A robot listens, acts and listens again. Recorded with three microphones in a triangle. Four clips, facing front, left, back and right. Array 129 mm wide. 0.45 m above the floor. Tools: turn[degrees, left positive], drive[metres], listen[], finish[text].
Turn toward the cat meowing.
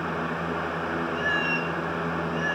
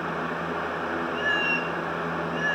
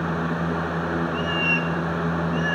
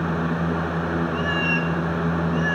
Thought: The cat meowing: 95° right.
Action: turn[-95]
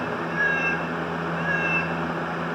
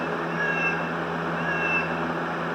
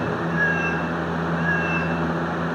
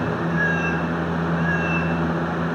Thought: The cat meowing is now 10° right.
Action: turn[-10]
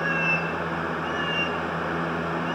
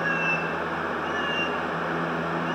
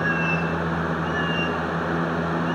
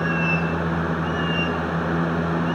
Action: listen[]
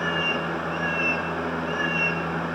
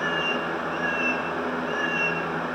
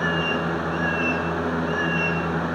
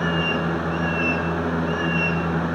Action: finish[Found it: a cat meowing, straight ahead, over 4 m away.]